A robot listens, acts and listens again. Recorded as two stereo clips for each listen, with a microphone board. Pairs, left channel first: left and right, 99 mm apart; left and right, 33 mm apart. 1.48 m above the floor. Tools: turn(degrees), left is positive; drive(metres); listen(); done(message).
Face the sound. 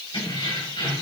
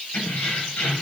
turn(degrees=60)
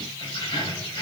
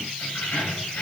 turn(degrees=50)
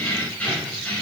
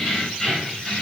turn(degrees=15)
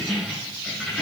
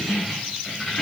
done("Facing the keys jangling.")